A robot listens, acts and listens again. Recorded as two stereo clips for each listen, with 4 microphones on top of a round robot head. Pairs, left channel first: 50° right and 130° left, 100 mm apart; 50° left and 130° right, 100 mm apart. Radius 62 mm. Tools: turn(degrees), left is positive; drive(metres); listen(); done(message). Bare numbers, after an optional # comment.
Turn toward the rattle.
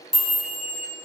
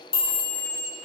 listen()
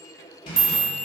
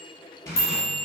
# The rattle: 10° right.
turn(-10)
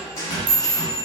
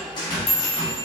done("Facing the rattle, under 1 m away.")